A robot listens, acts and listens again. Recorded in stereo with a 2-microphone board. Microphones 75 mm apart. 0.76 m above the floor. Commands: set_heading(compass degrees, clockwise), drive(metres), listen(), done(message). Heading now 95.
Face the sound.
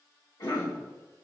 set_heading(20)
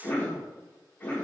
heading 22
set_heading(2)
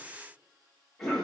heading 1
done("Found it: a cough, straight ahead.")